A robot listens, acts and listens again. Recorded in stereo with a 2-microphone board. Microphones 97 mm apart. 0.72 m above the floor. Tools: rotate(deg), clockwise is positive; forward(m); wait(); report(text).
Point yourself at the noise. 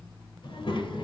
rotate(-60)
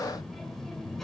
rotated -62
report("Found it: a child speaking, straight ahead.")